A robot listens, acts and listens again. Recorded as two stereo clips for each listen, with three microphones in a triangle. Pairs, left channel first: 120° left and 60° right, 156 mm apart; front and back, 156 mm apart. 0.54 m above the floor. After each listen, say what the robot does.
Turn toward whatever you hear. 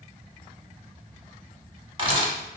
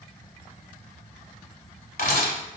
Facing the camera shutter, under 1 m away.